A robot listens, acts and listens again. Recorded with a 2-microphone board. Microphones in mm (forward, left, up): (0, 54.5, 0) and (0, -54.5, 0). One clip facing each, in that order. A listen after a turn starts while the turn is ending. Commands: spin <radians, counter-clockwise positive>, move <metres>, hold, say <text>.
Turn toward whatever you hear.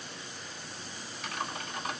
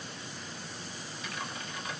spin 1.13
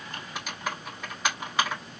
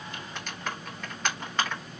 say Facing the typing on a keyboard, 2 to 4 m away.